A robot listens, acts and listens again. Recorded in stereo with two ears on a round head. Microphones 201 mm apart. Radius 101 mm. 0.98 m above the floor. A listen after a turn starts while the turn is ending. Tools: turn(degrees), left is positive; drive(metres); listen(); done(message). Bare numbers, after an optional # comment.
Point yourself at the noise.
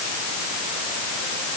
listen()
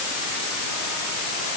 listen()
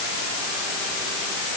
done("I can't make out anything.")